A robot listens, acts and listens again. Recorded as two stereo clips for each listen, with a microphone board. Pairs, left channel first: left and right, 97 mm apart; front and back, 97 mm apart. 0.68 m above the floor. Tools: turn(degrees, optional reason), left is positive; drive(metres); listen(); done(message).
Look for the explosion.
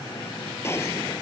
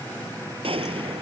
turn(degrees=155, reason="The explosion: 155° left.")
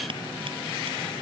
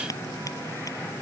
done("I heard an explosion from this way, but can't make it out now.")